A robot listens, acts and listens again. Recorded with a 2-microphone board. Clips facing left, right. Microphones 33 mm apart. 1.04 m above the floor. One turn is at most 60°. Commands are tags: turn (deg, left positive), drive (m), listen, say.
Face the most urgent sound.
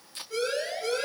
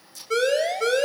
<turn deg="-60"/>
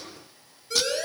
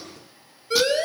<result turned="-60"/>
<turn deg="-35"/>
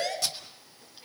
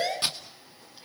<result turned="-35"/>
<turn deg="-10"/>
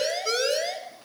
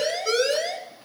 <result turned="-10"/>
<say>Facing the siren, over 4 m away.</say>